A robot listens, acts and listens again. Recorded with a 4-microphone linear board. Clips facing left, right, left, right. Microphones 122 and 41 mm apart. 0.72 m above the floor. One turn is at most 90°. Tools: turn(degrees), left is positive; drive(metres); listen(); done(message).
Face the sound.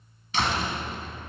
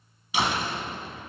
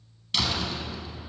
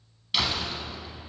turn(degrees=-30)
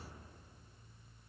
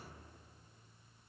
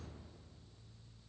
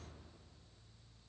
listen()
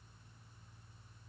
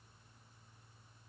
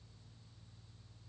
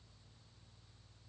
done("I heard a door slam, but can't make it out now. It was about 20° left or 140° right.")